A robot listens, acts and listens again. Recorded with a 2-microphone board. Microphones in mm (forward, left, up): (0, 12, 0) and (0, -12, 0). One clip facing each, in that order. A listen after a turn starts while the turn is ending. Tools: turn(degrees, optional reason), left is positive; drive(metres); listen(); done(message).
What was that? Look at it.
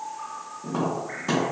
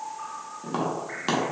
turn(degrees=-60, reason="The tapping: about 60° right or 120° right.")
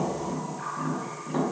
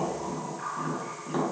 turn(degrees=-20, reason="So it is at 20° right.")
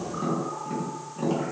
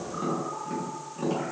done("Found it: tapping, straight ahead, under 1 m away.")